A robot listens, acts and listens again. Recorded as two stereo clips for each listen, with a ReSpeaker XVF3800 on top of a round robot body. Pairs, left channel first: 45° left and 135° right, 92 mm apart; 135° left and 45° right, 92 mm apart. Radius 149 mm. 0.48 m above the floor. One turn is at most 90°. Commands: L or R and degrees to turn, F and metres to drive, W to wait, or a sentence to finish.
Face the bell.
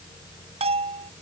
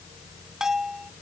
R90
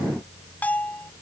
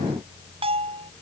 R30
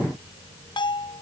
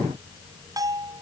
Found it: a bell, straight ahead.